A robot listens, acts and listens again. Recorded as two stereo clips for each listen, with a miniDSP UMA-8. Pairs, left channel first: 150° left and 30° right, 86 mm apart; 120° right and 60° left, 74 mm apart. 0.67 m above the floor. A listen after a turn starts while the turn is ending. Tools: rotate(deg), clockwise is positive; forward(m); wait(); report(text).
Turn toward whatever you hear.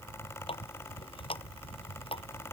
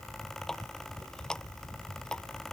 rotate(-160)
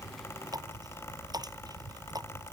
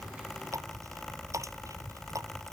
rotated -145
rotate(-15)
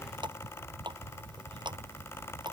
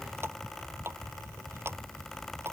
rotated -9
report("Facing the running tap.")